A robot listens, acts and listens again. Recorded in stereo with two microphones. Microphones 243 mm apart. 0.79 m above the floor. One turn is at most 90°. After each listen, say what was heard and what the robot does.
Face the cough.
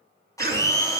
The cough: about 40° right or 140° right. Turn 40° right.
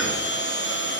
Keep listening.
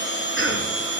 So it is at 90° right. Turn 90° right.
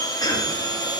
The cough is now 20° left. Turn 20° left.
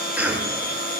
Found it: a cough, straight ahead.